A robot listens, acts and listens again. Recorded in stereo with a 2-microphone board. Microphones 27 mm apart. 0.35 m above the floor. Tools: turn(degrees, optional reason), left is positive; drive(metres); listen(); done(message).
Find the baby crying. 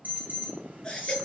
turn(degrees=30, reason="The baby crying: about 30° left or 150° left.")
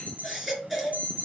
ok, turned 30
done("Found it: a baby crying, straight ahead.")